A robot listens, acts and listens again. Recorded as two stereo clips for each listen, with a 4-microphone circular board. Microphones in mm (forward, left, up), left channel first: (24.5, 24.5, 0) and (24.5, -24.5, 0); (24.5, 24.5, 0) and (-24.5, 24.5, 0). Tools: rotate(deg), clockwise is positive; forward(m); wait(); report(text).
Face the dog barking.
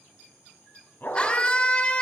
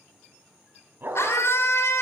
rotate(-135)
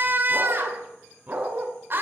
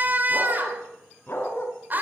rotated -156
rotate(40)
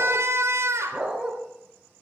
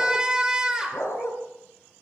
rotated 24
rotate(20)
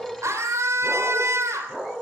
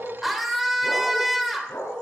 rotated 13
rotate(10)
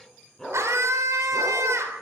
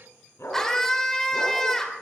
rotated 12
report("Found it: a dog barking, straight ahead, over 4 m away.")